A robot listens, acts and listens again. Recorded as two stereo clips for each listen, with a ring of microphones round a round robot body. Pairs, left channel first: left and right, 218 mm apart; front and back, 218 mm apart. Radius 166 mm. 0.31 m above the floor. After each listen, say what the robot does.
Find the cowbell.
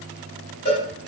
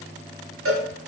Turn 165° left.
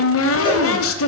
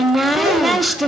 Keep listening.
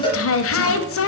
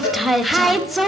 Turn 20° left.
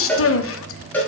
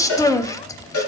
Facing the cowbell.